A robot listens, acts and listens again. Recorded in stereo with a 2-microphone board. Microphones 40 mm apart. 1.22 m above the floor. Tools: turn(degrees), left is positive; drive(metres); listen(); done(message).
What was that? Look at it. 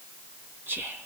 turn(degrees=-55)
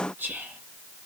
turn(degrees=-70)
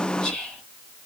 turn(degrees=15)
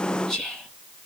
done("Found it: whispering, straight ahead, 2 to 4 m away.")